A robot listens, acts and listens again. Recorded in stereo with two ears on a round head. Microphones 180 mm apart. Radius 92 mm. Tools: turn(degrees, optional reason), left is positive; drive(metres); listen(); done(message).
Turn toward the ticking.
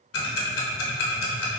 turn(degrees=60, reason="The ticking: about 60° left or 120° left.")
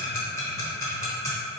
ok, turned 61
turn(degrees=15, reason="So it is at 15° left.")
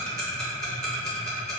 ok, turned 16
done("Facing the ticking.")